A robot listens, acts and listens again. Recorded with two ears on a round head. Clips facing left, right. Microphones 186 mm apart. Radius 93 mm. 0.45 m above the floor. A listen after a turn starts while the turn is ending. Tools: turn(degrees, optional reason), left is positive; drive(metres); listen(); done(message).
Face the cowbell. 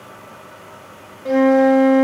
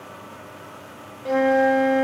listen()
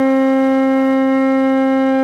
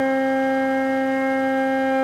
listen()
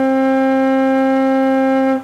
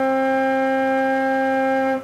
done("I can't make out a cowbell, only a flute.")